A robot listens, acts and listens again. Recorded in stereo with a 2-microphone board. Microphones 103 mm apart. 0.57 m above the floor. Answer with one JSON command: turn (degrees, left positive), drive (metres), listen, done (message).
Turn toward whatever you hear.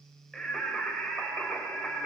{"turn": 30}
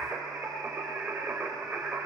{"turn": -20}
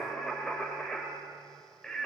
{"turn": 10}
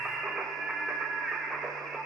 {"done": "Facing the singing, 2 to 4 m away."}